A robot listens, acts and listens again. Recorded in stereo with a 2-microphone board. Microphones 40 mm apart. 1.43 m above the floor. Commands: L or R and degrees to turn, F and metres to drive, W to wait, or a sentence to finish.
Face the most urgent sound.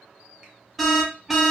R30
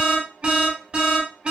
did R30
R145
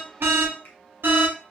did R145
R65
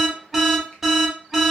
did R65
Facing the alarm.